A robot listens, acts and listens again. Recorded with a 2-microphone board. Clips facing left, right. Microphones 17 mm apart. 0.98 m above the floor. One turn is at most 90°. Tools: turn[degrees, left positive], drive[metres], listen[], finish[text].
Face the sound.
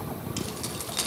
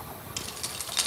Action: turn[-30]
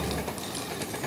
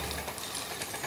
Action: listen[]
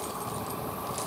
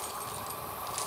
Action: listen[]
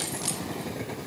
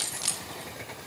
Action: turn[-30]
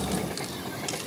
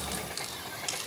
Action: listen[]
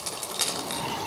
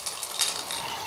Action: turn[30]
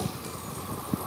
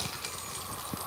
Action: listen[]
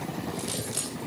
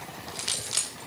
Thought: So it is at 30° right.
Action: turn[-30]
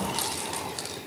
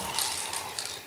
Action: finish[Facing the keys jangling, 2 to 4 m away.]